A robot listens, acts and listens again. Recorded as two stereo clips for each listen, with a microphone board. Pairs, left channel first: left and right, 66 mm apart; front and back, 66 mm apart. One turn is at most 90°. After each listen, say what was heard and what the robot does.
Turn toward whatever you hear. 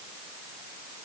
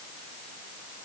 Keep listening.
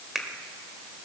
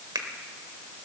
The finger snap: 175° right. Turn 90° right.
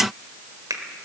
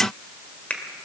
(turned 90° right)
The finger snap is now 70° right. Turn 70° right.
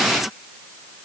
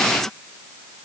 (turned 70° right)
Keep listening.
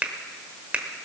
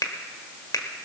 The finger snap is now 20° right. Turn 20° right.
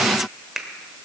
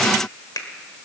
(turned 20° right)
Facing the finger snap, 1 to 2 m away.